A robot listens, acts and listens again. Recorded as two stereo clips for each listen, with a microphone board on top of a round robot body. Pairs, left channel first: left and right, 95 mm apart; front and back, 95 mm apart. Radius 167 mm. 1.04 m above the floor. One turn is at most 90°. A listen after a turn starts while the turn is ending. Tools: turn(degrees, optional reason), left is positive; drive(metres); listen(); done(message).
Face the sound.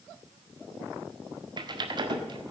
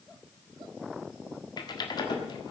turn(degrees=-45, reason="The typing on a keyboard: 45° right.")
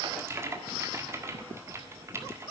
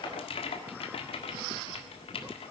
turn(degrees=-25, reason="The typing on a keyboard is now 25° right.")
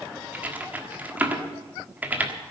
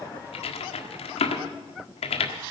turn(degrees=-15, reason="The typing on a keyboard is now 15° right.")
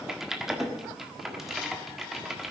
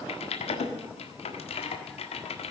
done("Found it: typing on a keyboard, straight ahead.")